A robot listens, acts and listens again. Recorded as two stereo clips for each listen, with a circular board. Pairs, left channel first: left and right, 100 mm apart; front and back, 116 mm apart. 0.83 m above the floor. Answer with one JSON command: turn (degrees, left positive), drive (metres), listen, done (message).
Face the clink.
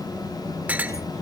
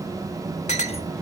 {"turn": -15}
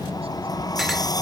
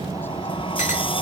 {"listen": true}
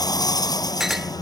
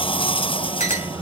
{"done": "Found it: a clink, straight ahead."}